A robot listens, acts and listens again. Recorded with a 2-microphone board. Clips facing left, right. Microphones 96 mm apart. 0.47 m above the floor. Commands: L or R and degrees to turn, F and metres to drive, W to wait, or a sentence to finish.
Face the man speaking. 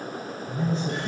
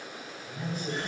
L25
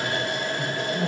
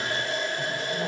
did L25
R15
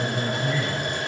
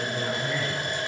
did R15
R15
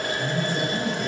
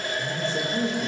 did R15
R30
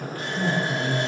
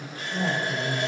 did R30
R30
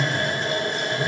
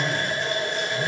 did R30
R15
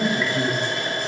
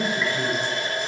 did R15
Found it: a man speaking, straight ahead, 1 to 2 m away.